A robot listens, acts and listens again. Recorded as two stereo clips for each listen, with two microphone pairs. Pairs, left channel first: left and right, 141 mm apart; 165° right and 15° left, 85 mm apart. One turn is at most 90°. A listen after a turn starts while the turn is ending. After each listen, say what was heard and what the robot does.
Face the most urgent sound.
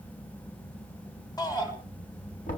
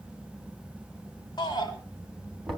The shout: 155° left. Turn 90° left.
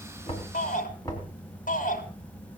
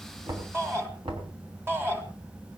The shout is now 75° left. Turn 75° left.
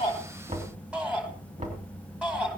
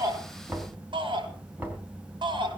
Found it: a shout, straight ahead, 2 to 4 m away.